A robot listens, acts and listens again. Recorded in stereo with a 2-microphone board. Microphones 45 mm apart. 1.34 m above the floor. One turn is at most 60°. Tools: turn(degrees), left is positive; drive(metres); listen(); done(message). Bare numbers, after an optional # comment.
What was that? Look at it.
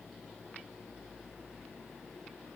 listen()
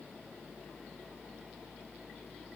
listen()
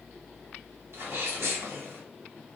# The sneeze: about 75° right or 105° right.
turn(-60)
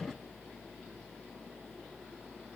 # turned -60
listen()
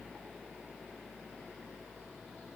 done("I heard a sneeze, but can't make it out now. It was about 15° right or 45° right.")